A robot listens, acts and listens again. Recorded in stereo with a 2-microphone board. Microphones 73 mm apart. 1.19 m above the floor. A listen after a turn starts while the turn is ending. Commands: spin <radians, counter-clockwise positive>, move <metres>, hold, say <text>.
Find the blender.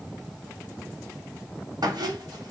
hold
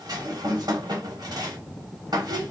hold
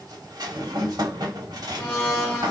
spin 0.44
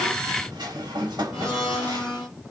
say Found it: a blender, straight ahead.